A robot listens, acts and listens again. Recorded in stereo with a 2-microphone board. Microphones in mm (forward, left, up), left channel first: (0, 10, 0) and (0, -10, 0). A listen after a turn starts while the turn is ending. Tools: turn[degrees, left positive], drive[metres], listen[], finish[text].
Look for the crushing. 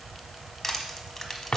Action: turn[30]
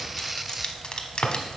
Thought: So it is at 140° left.
Action: turn[140]
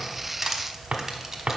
Thought: The crushing is now 10° right.
Action: turn[-10]
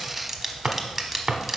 Action: finish[Found it: crushing, straight ahead.]